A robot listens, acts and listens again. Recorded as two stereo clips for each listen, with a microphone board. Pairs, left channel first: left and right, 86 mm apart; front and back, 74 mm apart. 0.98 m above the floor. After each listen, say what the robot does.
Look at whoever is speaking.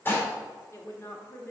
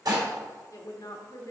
Turn 30° left.
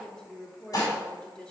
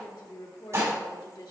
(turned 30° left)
Turn 10° left.
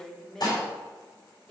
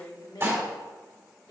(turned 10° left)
Facing the woman speaking.